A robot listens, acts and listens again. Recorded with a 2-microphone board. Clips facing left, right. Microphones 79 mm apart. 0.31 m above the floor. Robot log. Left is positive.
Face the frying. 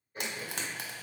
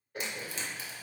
note: The frying: about 65° left or 115° left.
cmd yaw +65
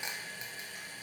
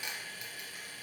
cmd idle
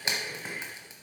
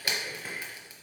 note: So it is at 30° left.
cmd yaw +30
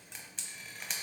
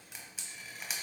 end: Found it: frying, straight ahead.